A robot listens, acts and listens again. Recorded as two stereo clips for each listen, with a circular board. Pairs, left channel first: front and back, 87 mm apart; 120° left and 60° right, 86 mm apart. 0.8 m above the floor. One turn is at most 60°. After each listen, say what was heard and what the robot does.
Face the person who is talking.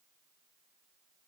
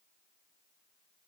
Keep listening.
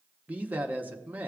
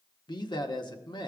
The man speaking: 115° left. Turn 60° left.
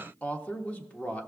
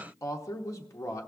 The man speaking is now 75° left. Turn 60° left.
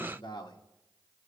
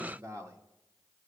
The man speaking is now 10° right. Turn 10° right.
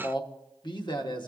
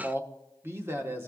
Found it: a man speaking, straight ahead, under 1 m away.